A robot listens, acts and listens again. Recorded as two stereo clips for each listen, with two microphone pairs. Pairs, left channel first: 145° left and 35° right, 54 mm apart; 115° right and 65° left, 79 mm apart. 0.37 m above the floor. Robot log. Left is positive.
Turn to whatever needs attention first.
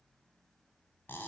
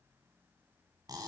cmd idle
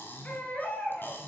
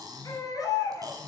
note: The baby crying: 155° right.
cmd yaw -155
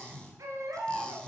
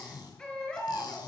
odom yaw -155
note: The baby crying is now 35° right.
cmd yaw -35
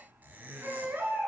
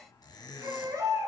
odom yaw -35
note: The baby crying is now 20° left.
cmd yaw +20
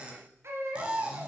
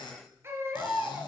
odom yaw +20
end: Facing the baby crying.